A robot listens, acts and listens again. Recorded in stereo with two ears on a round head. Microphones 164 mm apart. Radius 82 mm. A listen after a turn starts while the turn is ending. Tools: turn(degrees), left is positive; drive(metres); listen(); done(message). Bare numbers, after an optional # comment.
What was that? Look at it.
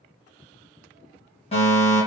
# The fire alarm: about 35° left or 145° left.
turn(35)
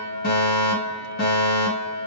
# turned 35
# So it is at 100° left.
turn(100)
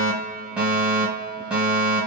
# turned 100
done("Facing the fire alarm.")